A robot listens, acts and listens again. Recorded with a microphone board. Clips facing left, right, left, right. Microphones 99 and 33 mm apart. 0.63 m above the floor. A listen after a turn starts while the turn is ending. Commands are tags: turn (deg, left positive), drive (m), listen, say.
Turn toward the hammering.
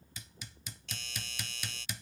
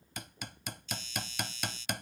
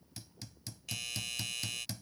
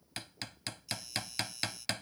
<turn deg="-60"/>
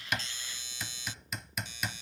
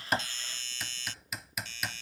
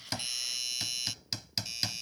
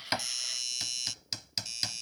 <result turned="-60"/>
<say>Facing the hammering.</say>